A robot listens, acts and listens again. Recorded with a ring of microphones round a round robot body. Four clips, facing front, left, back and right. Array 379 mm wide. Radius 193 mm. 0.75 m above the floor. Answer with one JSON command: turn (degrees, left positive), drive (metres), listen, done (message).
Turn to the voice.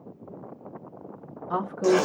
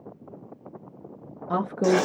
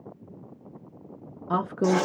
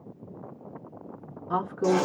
{"turn": 130}
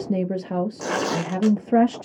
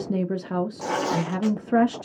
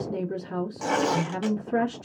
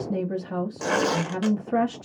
{"turn": 30}
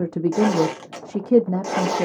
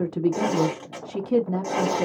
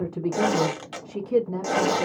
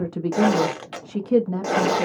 {"turn": -10}
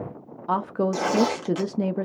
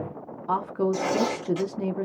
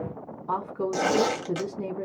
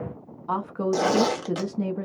{"done": "Found it: a woman speaking, straight ahead, under 1 m away."}